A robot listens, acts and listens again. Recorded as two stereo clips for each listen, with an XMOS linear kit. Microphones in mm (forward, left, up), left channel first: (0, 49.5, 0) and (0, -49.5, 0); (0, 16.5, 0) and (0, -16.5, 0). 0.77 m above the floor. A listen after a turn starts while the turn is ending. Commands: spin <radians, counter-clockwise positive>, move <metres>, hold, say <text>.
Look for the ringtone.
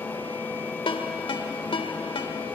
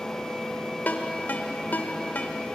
spin 1.13
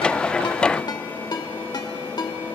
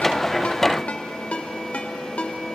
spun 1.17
spin 0.79
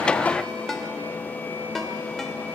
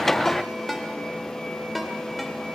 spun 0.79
say Found it: a ringtone, straight ahead.